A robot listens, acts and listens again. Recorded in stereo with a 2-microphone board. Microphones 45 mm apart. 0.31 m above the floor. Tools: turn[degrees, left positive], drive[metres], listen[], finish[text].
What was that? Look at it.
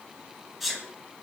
Action: turn[30]
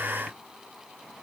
Action: listen[]
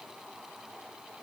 Action: finish[I heard a sneeze, but can't make it out now. It was about 30° right or 150° left.]